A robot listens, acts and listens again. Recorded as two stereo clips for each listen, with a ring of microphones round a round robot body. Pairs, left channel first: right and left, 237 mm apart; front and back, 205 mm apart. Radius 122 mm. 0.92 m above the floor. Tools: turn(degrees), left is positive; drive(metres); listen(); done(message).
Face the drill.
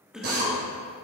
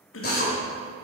turn(degrees=40)
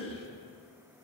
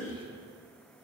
listen()
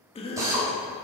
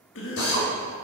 turn(degrees=15)
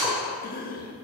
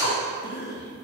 done("Facing the drill.")